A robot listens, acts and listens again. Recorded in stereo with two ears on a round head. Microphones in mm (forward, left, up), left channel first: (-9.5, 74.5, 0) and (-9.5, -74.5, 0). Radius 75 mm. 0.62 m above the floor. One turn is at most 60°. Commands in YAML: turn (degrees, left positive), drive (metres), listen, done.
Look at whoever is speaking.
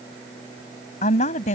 turn: 45
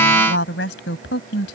turn: 60
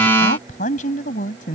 turn: 50
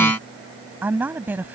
turn: -10
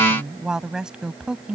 done: "Facing the woman speaking."